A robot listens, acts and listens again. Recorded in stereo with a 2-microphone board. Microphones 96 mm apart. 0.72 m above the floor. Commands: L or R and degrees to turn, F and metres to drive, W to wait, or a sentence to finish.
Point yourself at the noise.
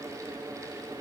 W
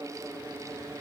W
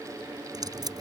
R45
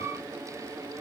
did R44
W
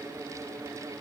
I heard a dropped coin, but can't make it out now. It was about straight ahead or 90° right.